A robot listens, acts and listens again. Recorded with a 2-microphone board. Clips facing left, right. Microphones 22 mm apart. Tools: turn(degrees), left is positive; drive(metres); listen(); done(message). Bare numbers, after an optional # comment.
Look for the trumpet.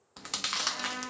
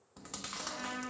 # The trumpet: about 25° left or 155° left.
turn(25)
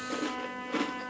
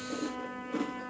# So it is at 130° left.
turn(130)
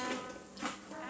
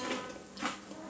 # The trumpet is now 60° left.
turn(60)
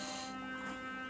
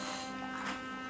# The trumpet is now 20° right.
turn(-20)
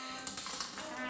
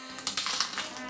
done("Facing the trumpet.")